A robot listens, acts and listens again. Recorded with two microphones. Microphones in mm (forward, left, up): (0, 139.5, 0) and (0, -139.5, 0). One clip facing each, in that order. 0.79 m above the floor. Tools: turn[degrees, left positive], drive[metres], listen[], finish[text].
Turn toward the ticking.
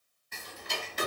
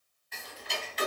Thought: The ticking: about 50° left or 130° left.
Action: turn[50]
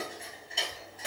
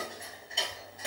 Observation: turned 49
Action: finish[Facing the ticking.]